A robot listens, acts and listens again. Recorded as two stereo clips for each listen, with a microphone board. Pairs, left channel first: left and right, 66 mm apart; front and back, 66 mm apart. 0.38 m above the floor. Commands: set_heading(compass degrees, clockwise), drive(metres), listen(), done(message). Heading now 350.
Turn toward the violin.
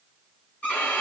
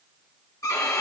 set_heading(325)
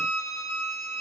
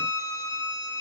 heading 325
done("Found it: a violin, straight ahead.")